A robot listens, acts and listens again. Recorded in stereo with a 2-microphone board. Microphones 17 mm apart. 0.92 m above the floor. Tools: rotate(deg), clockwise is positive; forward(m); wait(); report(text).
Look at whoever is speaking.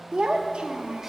rotate(60)
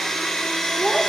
wait()
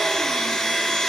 wait()
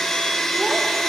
report("I heard a child speaking, but can't make it out now. It was about straight ahead or 60° right.")